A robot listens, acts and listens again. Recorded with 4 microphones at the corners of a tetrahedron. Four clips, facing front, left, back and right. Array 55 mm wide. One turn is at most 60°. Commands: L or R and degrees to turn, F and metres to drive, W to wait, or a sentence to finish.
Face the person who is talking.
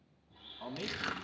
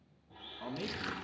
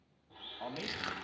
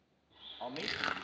R60
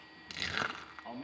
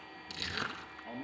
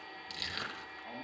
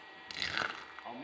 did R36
R60
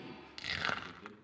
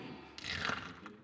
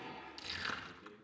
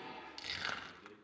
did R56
Facing the man speaking, 2 to 4 m away.